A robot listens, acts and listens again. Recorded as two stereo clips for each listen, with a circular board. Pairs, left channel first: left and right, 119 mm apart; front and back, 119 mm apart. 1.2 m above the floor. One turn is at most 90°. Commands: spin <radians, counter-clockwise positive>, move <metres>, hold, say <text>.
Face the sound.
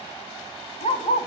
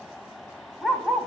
spin 1.57
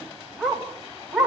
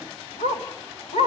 say Found it: a dog barking, straight ahead.